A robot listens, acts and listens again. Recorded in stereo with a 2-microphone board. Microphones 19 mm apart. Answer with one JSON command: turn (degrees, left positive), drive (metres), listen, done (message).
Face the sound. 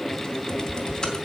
{"turn": 45}
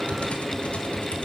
{"turn": 90}
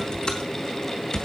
{"turn": 40}
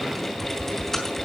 {"turn": 10}
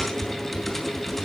{"done": "Facing the typing on a keyboard, 2 to 4 m away."}